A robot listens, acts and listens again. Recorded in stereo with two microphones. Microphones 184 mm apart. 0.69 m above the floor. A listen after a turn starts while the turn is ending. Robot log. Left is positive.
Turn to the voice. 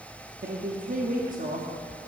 note: The woman speaking: about 50° right or 130° right.
cmd yaw -50
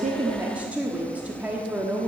note: So it is at 10° right.
cmd yaw -10
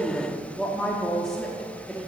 end: Facing the woman speaking, 1 to 2 m away.